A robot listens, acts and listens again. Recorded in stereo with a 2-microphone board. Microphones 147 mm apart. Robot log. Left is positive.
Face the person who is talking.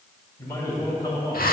note: The man speaking: about 30° left or 150° left.
cmd yaw +30
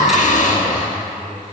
cmd idle
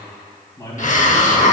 note: The man speaking: about 30° left or 150° left.
cmd yaw +30
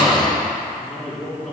note: So it is at 10° left.
cmd yaw +10
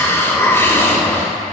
cmd idle
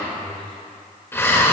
cmd idle
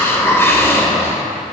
end: Facing where the man speaking came from. I can't hear it now.